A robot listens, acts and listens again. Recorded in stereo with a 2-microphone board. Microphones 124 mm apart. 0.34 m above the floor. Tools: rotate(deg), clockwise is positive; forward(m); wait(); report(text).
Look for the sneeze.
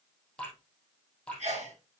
rotate(60)
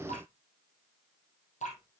wait()
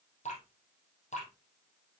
report("I heard a sneeze, but can't make it out now. It was about straight ahead or 60° right.")